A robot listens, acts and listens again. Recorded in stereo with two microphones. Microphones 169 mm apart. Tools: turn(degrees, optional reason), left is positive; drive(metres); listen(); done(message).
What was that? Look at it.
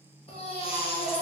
turn(degrees=35, reason="The baby crying: about 35° left or 145° left.")
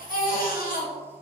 turn(degrees=105, reason="So it is at 105° left.")
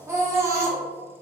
turn(degrees=-20, reason="The baby crying is now 20° right.")
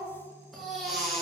done("Facing the baby crying.")